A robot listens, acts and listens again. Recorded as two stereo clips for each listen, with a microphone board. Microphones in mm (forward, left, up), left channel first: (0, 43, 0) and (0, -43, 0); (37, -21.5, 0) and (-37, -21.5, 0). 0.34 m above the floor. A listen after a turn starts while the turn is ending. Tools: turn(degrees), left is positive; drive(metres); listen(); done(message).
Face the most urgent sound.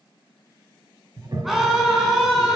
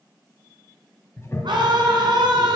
turn(degrees=-175)
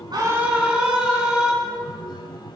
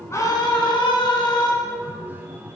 turn(degrees=-10)
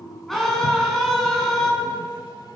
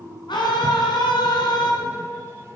done("Found it: a scream, straight ahead, 2 to 4 m away.")